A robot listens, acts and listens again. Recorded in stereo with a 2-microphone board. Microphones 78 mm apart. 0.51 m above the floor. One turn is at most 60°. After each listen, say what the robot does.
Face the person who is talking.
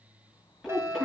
Turn 30° right.
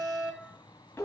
Turn 30° left.
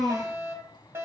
Found it: a child speaking, straight ahead, over 4 m away.